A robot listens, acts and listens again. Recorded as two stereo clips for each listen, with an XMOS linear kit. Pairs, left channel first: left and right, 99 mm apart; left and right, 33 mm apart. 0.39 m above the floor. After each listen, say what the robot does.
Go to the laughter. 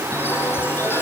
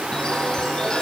Keep listening.
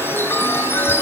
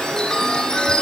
Keep listening.
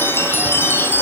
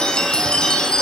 I can't make out laughter, only a chime.